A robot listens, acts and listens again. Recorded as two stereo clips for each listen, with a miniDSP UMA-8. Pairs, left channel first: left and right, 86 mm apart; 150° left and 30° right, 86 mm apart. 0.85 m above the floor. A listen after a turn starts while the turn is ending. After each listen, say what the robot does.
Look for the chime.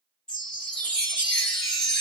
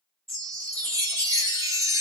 Turn 10° left.
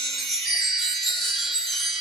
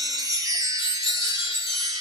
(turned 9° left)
Found it: a chime, straight ahead, 1 to 2 m away.